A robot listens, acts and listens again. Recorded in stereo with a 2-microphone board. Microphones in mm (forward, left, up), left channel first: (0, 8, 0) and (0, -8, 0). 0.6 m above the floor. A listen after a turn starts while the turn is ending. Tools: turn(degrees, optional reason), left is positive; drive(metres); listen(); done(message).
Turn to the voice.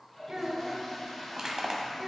turn(degrees=-45, reason="The child speaking: about 45° right or 135° right.")
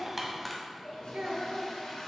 turn(degrees=-90, reason="So it is at 90° right.")
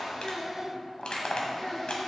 turn(degrees=10, reason="The child speaking is now 10° left.")
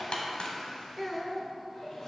done("Found it: a child speaking, straight ahead, 1 to 2 m away.")